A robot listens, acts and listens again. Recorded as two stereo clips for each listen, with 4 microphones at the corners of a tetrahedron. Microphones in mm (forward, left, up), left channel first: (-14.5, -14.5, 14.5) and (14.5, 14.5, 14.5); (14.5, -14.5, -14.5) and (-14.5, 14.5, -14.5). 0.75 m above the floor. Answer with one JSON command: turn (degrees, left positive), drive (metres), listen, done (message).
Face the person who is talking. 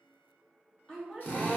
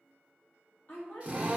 {"turn": -70}
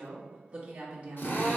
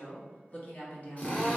{"done": "Found it: a woman speaking, straight ahead, 1 to 2 m away."}